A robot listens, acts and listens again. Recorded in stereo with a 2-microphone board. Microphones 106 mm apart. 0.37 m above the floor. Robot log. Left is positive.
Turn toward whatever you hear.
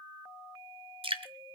note: The dripping: about 65° right or 115° right.
cmd yaw -65
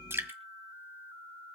note: So it is at 25° right.
cmd yaw -25
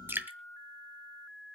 note: The dripping is now 20° right.
cmd yaw -20
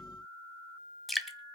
end: Found it: dripping, straight ahead, 1 to 2 m away.